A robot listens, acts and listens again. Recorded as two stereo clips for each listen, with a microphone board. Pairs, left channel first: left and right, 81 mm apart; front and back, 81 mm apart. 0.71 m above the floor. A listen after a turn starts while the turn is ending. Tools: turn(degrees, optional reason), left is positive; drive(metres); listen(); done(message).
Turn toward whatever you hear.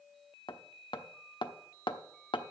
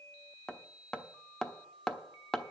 turn(degrees=80, reason="The hammering: 80° left.")
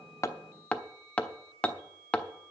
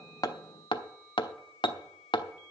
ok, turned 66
turn(degrees=15, reason="The hammering is now 15° left.")
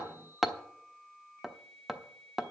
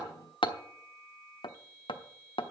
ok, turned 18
done("Facing the hammering.")